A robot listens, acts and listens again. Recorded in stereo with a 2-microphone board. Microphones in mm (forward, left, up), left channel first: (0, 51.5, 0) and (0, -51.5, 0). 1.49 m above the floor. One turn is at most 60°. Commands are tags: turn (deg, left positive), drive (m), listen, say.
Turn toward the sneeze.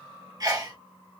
<turn deg="-35"/>
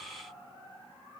<listen/>
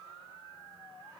<say>I heard a sneeze, but can't make it out now. It was about straight ahead or 110° right.</say>